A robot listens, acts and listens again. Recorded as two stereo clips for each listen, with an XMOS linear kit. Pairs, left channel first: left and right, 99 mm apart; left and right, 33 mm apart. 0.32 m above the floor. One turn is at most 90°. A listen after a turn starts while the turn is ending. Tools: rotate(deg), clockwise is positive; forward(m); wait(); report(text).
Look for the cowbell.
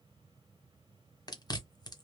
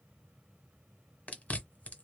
wait()
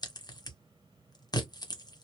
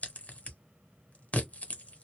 wait()
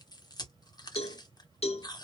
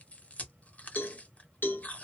rotate(-90)
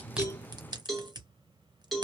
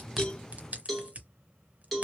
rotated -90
report("Facing the cowbell.")